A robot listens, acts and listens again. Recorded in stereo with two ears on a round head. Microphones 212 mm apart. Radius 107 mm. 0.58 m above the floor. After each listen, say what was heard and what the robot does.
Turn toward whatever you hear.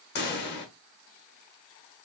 The pop: about 50° left or 130° left. Turn 50° left.
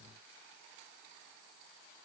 Keep listening.
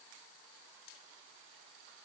I heard a pop, but can't make it out now. It was about straight ahead or 80° left.